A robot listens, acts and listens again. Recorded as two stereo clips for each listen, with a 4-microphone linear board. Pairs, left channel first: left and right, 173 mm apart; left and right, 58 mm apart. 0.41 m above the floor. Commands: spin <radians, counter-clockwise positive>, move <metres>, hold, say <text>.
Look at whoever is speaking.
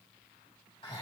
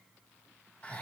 hold
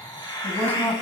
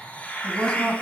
spin 0.52
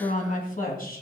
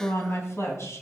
spin 2.18
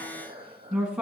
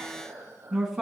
say Found it: a woman speaking, straight ahead, 2 to 4 m away.